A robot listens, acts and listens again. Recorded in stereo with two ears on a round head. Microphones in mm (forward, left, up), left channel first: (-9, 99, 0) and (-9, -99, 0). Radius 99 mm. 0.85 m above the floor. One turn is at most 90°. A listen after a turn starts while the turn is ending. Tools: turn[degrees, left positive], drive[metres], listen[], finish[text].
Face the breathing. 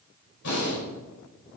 Thought: The breathing: about 65° left or 115° left.
Action: turn[65]
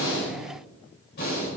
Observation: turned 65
Thought: So it is at 50° left.
Action: turn[50]
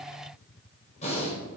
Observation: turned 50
Thought: The breathing is now 35° left.
Action: turn[35]
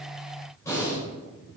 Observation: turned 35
Thought: The breathing is now 15° left.
Action: turn[15]
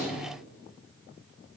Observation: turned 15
Action: listen[]
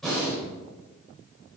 Action: finish[Found it: breathing, straight ahead.]